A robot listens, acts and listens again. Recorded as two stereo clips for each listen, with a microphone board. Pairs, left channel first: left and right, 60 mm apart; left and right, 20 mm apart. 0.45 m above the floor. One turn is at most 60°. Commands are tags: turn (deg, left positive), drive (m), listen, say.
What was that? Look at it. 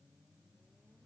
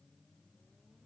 <listen/>
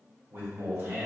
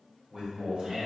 <turn deg="-55"/>
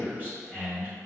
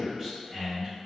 <turn deg="-35"/>
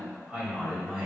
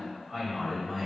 <turn deg="-20"/>
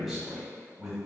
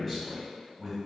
<turn deg="-10"/>
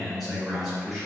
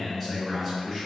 <say>Found it: a man speaking, straight ahead, 2 to 4 m away.</say>